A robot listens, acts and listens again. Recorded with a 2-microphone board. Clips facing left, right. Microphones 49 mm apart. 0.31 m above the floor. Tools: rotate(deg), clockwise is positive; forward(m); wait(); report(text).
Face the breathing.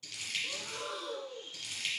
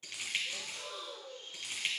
rotate(-70)
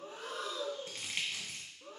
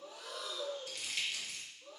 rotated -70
rotate(-40)
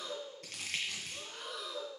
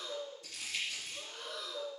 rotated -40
report("Facing the breathing, under 1 m away.")